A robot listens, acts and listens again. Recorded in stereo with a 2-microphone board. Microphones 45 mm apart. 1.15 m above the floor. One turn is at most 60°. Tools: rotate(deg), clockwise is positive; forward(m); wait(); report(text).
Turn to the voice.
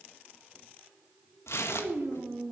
rotate(60)
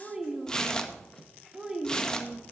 rotate(10)
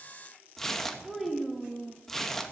report("Found it: a child speaking, straight ahead.")